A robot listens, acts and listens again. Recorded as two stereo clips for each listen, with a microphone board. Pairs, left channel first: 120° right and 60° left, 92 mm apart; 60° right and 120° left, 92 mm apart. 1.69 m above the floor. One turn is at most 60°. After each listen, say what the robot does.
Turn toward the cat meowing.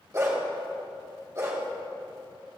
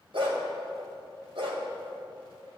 Keep listening.
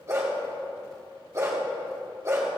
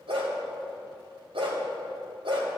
Keep listening.
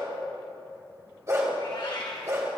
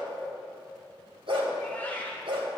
Turn 60° right.
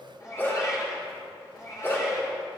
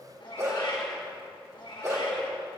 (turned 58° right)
Turn 60° right.
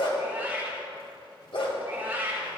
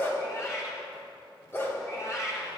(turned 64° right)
Turn 10° right.
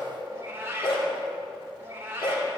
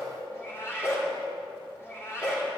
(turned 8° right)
Facing the cat meowing, 2 to 4 m away.